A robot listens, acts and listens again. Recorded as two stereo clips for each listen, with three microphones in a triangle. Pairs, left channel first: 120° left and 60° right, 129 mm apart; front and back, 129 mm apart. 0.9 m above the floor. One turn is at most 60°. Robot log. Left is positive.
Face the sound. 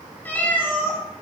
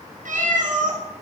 note: The cat meowing: 165° right.
cmd yaw -60
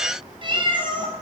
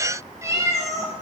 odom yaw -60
note: The cat meowing is now 115° right.
cmd yaw -60
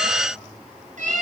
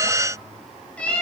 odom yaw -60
note: The cat meowing is now 80° right.
cmd yaw -60
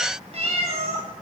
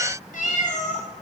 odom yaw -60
note: The cat meowing is now 25° right.
cmd yaw -25
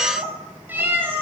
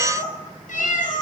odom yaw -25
note: The cat meowing is now 15° left.
cmd yaw +15
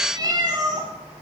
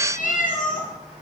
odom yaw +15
end: Found it: a cat meowing, straight ahead.